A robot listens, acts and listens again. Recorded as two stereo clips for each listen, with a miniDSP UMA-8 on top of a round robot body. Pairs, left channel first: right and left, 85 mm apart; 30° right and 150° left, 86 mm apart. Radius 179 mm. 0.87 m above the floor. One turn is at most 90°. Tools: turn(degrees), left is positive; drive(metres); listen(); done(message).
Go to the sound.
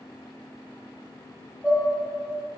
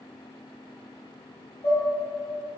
turn(degrees=-30)
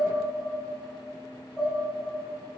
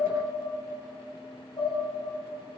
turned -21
turn(degrees=-10)
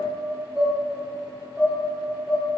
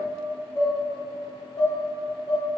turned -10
drive(metres=1.0)
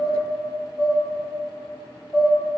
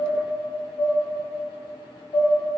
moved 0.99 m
drive(metres=1.0)
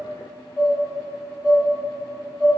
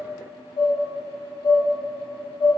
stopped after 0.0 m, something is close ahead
done("Arrived at the dishes clattering, straight ahead.")